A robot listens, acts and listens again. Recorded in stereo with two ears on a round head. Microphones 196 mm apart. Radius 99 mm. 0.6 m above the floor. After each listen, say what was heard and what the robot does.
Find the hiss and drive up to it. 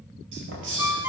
The hiss: about 65° right or 115° right. Turn 65° right.
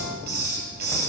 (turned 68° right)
So it is at 45° right. Turn 45° right.
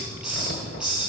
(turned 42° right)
Drive 1.0 m forward.
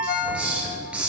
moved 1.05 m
Drive 1.0 m forward.
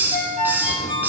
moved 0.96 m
The hiss is now 10° right. Turn 10° right.
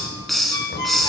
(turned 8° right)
Drive 1.0 m forward.
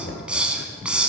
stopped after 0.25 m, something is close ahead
I am next to the hiss.